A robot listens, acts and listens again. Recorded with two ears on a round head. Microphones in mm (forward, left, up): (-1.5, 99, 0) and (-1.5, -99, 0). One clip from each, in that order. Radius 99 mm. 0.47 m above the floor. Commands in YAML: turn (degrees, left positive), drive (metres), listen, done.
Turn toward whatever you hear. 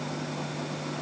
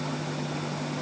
listen: true
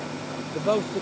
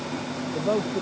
turn: 40
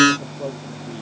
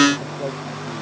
done: "Found it: a man speaking, straight ahead."